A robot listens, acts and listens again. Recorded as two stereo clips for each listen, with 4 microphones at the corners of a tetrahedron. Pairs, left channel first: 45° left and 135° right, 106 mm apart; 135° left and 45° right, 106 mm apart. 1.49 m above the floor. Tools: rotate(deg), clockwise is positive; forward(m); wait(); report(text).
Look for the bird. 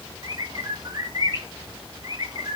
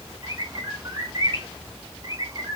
rotate(95)
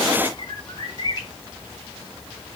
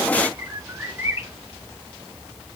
rotate(-15)
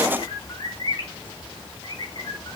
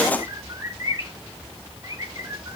report("Found it: a bird, straight ahead.")